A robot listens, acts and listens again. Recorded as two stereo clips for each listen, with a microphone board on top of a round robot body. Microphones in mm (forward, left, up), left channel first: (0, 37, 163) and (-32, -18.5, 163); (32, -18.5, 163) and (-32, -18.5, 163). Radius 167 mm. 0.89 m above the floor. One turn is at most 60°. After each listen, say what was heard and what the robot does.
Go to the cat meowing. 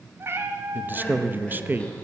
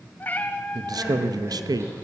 The cat meowing: 65° right. Turn 60° right.
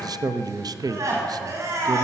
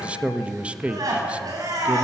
Keep listening.
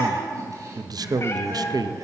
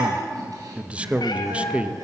Keep listening.
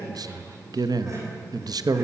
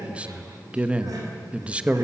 I heard a cat meowing from this way, but can't make it out now. I did not reach it.